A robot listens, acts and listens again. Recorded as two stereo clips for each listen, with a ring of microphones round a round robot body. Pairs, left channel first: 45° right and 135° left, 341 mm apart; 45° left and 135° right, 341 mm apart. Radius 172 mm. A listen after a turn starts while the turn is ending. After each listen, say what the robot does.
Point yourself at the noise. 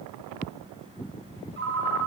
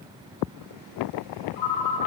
Turn 75° left.
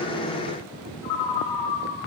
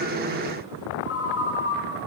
Turn 15° right.
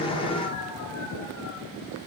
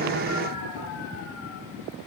Keep listening.
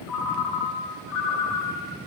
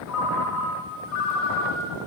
Facing the ringtone, 1 to 2 m away.